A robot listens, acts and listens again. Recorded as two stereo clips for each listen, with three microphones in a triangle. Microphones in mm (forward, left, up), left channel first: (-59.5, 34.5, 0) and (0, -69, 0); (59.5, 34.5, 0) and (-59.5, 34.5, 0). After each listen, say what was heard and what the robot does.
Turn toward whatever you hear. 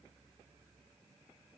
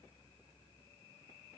Keep listening.
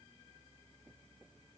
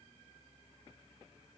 Keep listening.
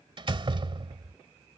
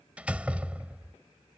The door slam: 105° right. Turn 105° right.
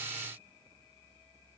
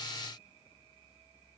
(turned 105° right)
Facing where the door slam came from. I can't hear it now.